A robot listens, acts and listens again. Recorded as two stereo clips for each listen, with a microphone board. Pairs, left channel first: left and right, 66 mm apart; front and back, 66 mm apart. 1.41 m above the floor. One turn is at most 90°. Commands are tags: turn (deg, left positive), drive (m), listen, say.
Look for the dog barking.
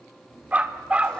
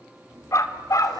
<turn deg="-20"/>
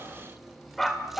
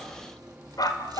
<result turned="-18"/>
<say>Facing the dog barking, 2 to 4 m away.</say>